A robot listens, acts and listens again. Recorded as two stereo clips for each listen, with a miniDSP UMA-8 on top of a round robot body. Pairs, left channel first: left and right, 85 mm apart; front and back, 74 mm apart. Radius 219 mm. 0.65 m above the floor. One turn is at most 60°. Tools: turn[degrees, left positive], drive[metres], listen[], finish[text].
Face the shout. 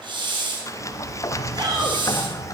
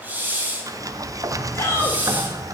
Thought: The shout: 55° right.
Action: turn[-55]
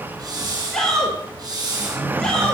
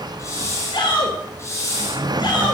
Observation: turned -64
Action: finish[Facing the shout, over 4 m away.]